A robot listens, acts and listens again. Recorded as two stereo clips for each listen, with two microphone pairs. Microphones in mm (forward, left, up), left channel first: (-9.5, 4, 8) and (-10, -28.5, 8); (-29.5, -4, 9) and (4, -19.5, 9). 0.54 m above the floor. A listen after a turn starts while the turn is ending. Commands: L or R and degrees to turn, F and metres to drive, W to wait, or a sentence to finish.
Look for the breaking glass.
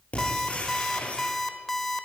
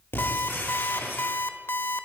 L135
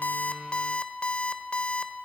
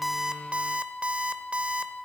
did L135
I heard breaking glass from this way, but can't make it out now.